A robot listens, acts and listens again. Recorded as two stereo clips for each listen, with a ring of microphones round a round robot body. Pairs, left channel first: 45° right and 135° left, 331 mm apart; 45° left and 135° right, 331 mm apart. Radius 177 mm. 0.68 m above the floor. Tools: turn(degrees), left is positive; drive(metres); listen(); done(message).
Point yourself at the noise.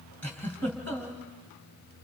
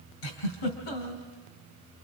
turn(degrees=40)
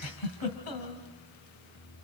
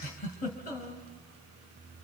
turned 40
turn(degrees=-20)
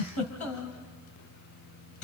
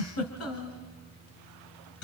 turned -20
done("Facing the giggle.")